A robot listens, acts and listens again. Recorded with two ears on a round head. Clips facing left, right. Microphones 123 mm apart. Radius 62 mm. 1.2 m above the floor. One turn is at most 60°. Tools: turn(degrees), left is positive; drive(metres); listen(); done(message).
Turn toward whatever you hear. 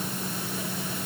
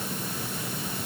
listen()
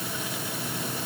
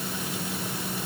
listen()
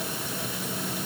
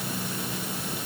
done("I can't make out anything.")